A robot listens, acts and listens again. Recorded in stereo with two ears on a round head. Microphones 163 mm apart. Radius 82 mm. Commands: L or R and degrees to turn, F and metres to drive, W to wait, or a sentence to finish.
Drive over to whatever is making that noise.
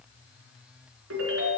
R90
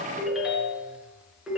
F1.0
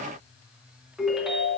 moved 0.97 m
F1.0
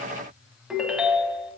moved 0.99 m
F1.0
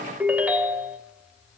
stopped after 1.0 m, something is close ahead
R10
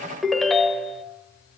Arrived at the ringtone, straight ahead.